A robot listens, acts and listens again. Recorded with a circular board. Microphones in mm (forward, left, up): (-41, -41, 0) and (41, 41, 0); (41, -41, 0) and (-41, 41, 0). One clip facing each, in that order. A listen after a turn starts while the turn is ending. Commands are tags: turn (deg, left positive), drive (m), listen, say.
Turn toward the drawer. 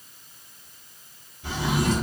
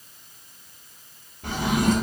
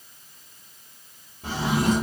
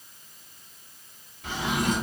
<turn deg="10"/>
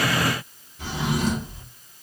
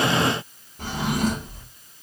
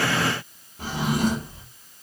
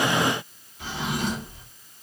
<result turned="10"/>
<say>Facing the drawer, 1 to 2 m away.</say>